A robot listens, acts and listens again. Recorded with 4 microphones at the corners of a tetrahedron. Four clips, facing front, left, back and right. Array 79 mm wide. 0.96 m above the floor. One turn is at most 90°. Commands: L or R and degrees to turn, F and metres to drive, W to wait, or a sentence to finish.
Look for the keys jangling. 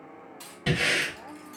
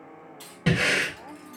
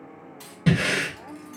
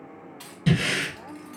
R90
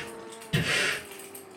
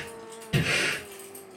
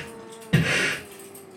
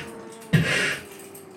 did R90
R30
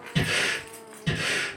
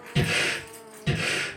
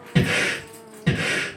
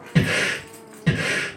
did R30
R35
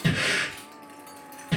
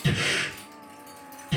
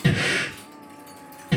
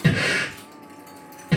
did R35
R30
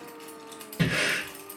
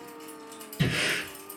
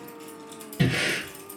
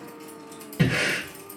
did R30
Found it: keys jangling, straight ahead.